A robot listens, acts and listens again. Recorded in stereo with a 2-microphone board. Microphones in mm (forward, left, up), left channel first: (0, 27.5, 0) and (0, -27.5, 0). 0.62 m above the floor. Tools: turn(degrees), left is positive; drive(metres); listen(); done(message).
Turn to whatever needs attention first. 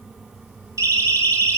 turn(degrees=-70)
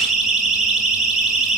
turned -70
done("Found it: a siren, straight ahead, over 4 m away.")